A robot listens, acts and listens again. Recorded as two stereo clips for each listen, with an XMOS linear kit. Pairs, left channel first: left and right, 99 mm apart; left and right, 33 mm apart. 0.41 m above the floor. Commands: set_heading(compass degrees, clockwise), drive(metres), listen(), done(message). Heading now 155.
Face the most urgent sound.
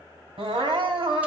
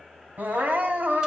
set_heading(210)
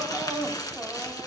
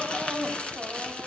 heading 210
set_heading(220)
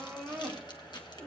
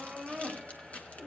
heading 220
done("Found it: crying, straight ahead.")